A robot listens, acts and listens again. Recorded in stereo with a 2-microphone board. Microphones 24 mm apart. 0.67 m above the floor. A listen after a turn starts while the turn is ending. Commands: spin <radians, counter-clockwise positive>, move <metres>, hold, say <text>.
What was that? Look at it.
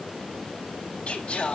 spin 1.13
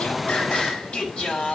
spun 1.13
spin 0.79
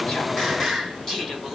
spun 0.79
say Facing the singing, 2 to 4 m away.